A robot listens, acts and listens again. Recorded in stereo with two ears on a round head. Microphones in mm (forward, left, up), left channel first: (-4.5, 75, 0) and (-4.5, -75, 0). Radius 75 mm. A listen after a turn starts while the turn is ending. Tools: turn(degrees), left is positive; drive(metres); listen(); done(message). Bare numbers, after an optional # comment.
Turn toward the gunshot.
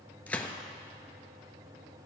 turn(30)
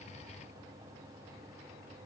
listen()
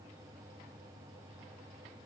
done("I heard a gunshot, but can't make it out now. It was about 20° right or 140° left.")